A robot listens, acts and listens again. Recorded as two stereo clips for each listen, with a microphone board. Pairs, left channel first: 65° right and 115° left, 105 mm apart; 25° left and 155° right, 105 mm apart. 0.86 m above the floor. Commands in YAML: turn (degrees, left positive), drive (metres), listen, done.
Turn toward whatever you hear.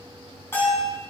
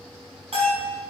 turn: -135
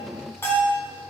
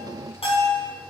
done: "Found it: a bell, straight ahead."